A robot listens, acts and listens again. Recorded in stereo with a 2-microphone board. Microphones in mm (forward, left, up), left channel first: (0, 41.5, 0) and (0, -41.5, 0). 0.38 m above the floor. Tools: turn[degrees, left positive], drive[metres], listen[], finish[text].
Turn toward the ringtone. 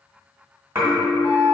Thought: The ringtone: about 40° left or 140° left.
Action: turn[40]
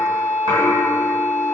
Action: listen[]
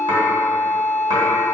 Action: listen[]
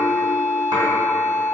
Action: finish[I heard a ringtone, but can't make it out now. It was about straight ahead or 100° left.]